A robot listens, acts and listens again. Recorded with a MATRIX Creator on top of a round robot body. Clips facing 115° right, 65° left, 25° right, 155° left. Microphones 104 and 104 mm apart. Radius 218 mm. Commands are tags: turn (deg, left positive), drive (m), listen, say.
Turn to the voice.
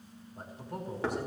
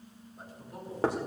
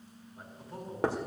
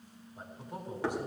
<turn deg="-130"/>
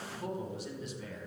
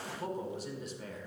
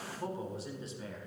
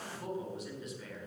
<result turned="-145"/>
<turn deg="30"/>
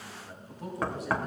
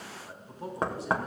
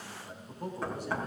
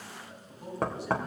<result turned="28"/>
<turn deg="15"/>
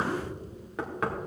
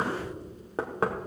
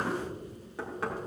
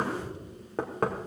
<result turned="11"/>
<listen/>
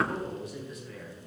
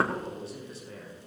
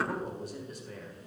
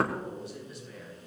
<turn deg="15"/>
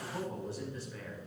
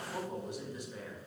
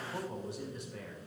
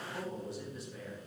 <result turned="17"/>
<say>Found it: a man speaking, straight ahead.</say>